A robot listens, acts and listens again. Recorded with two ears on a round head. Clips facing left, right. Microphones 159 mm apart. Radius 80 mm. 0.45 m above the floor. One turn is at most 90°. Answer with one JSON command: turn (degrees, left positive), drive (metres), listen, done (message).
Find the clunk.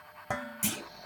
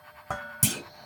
{"turn": -45}
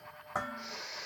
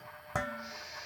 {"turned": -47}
{"listen": true}
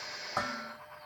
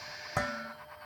{"done": "I heard a clunk, but can't make it out now. It was about straight ahead or 85° right."}